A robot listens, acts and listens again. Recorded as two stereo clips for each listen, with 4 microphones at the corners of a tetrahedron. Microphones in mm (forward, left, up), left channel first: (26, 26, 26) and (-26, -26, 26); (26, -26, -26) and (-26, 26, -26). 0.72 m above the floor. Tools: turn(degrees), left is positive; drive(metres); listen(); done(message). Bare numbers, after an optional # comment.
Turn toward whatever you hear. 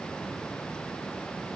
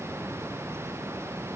listen()
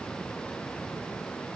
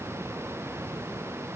listen()
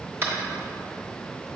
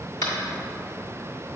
# The tapping: 80° right.
turn(-80)
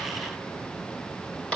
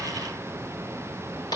# The tapping is now 30° right.
turn(-30)
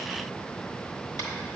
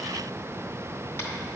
listen()
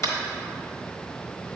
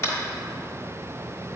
done("Facing the tapping.")